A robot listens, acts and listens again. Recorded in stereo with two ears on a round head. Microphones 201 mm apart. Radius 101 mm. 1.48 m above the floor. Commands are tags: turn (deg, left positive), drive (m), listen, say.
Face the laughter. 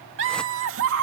<turn deg="-65"/>
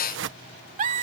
<turn deg="-35"/>
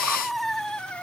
<say>Facing the laughter.</say>